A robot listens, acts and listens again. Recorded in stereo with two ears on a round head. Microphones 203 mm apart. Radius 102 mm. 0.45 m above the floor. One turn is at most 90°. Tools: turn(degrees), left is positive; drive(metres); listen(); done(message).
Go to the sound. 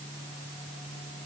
listen()
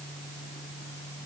listen()
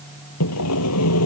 turn(degrees=90)
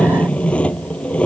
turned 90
drive(metres=1.0)
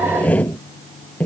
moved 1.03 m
drive(metres=1.0)
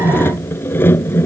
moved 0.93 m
turn(degrees=10)
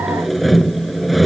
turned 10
drive(metres=1.0)
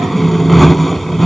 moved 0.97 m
drive(metres=1.0)
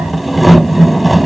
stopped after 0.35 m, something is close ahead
done("Arrived at the sawing, straight ahead.")